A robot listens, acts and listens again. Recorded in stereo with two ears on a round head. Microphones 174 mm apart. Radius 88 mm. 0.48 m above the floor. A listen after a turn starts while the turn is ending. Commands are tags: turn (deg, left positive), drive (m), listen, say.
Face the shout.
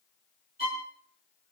<listen/>
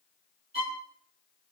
<listen/>
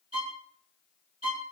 <say>I can't make out a shout to turn to.</say>